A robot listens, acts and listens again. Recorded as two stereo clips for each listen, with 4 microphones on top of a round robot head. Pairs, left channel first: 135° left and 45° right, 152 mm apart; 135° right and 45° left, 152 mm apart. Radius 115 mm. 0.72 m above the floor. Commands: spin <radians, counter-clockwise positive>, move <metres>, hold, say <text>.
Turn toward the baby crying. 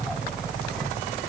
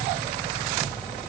hold
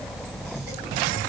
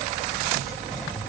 hold
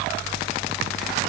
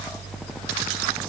say I can't make out a baby crying to turn to.